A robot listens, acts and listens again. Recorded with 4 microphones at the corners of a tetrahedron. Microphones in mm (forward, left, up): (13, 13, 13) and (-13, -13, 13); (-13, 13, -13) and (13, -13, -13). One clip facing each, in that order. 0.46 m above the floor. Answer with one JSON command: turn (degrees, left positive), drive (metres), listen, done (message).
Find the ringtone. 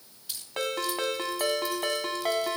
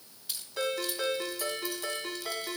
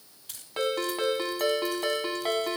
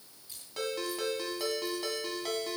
{"turn": 80}
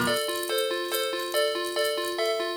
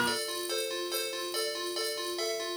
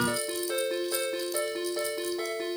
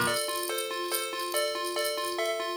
{"turn": -15}
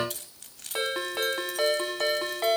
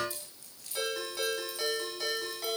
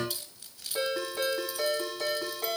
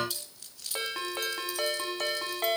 {"done": "Found it: a ringtone, straight ahead, 2 to 4 m away."}